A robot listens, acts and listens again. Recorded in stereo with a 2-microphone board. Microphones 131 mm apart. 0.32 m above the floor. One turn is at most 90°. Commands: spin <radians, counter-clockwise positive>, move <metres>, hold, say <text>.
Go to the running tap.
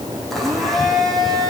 hold
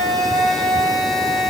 hold
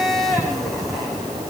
say I can't make out a running tap to turn to.